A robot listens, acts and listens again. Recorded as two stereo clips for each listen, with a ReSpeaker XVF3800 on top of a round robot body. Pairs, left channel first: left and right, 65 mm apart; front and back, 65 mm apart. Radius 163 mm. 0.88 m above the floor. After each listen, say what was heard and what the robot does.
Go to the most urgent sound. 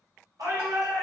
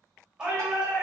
The shout: 100° right. Turn 100° right.
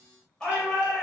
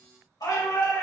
The shout is now 15° left. Turn 15° left.
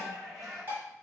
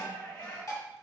Drive 1.0 m forward.
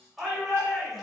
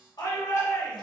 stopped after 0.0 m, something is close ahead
Something is in my way. I am facing the shout but have not reached it.